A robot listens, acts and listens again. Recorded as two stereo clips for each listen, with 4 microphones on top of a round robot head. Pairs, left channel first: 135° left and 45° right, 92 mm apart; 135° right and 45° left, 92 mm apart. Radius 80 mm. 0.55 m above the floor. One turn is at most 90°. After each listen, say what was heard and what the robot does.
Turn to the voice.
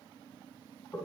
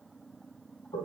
Keep listening.
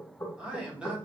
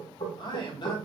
The man speaking: 125° right. Turn 90° right.
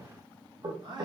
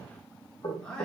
The man speaking is now 50° right. Turn 50° right.
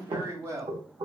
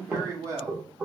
Found it: a man speaking, straight ahead.